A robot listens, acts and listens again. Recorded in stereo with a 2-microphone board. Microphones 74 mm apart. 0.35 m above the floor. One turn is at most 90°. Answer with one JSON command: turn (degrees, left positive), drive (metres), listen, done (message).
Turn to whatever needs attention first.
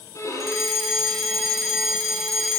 {"turn": 30}
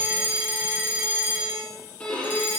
{"turn": -25}
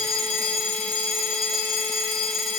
{"done": "Found it: a fire alarm, straight ahead, over 4 m away."}